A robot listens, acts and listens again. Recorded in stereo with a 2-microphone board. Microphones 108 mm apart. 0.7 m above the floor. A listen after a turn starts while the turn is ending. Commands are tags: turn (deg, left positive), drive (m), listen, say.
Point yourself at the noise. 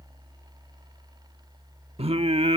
<turn deg="-65"/>
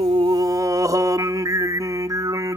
<turn deg="-35"/>
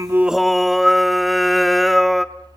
<say>Found it: singing, straight ahead, under 1 m away.</say>